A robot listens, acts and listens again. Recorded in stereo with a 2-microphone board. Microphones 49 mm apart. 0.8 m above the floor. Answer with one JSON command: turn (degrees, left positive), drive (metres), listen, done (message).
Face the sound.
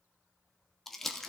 {"turn": 30}
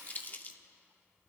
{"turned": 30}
{"turn": 145}
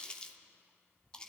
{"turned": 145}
{"turn": 20}
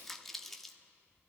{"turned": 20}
{"done": "Facing the crumpling."}